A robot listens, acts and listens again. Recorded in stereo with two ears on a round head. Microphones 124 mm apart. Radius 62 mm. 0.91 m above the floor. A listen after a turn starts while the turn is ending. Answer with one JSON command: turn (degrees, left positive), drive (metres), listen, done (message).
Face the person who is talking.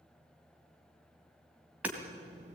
{"turn": -55}
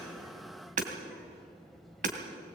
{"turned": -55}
{"done": "Found it: a child speaking, straight ahead."}